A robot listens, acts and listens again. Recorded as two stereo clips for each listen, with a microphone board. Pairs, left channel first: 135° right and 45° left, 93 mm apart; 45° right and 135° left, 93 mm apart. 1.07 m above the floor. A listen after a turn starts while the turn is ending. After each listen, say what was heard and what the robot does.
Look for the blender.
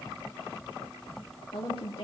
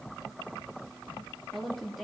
Keep listening.
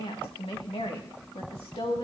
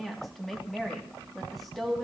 Keep listening.
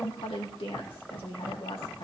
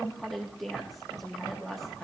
I can't make out a blender, only a woman speaking.